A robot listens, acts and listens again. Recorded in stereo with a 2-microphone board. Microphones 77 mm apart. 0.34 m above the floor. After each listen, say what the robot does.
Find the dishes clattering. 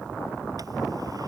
Keep listening.
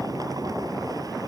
Keep listening.
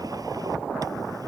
I can't make out dishes clattering to turn to.